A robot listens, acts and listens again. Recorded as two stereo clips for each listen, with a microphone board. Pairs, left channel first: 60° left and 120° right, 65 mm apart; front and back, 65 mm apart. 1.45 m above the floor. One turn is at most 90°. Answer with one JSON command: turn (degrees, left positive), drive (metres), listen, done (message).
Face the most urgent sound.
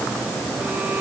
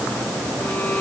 {"listen": true}
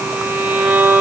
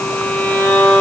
{"listen": true}
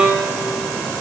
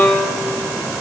{"done": "I can't make out anything urgent, only a violin."}